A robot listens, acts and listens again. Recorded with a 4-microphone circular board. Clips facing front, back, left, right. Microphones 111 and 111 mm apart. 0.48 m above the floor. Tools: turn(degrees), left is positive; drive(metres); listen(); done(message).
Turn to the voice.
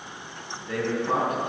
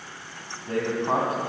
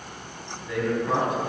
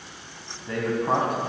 turn(degrees=-125)
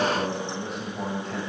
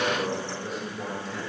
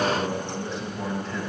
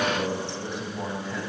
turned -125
turn(degrees=-10)
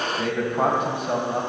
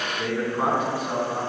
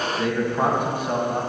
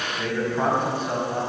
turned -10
turn(degrees=20)
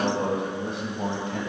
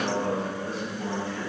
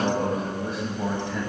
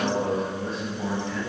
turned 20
turn(degrees=15)
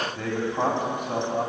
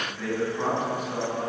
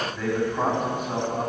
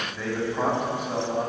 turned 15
done("Facing the man speaking.")